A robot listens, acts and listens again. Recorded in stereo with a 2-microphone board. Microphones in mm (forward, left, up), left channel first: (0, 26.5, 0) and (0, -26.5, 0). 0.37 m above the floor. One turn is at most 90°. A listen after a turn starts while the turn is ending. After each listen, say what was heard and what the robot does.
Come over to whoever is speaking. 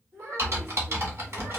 The child speaking: about 55° right or 125° right. Turn 55° right.
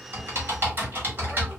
Keep listening.
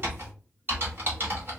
Keep listening.
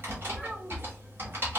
I heard a child speaking, but can't make it out now. It was about straight ahead or 70° right. I did not reach it.